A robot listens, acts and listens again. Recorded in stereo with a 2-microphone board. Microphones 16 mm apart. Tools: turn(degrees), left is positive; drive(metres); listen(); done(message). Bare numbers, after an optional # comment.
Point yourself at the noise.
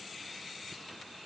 listen()
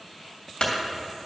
turn(90)
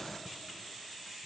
done("I heard a clunk from this way, but can't make it out now.")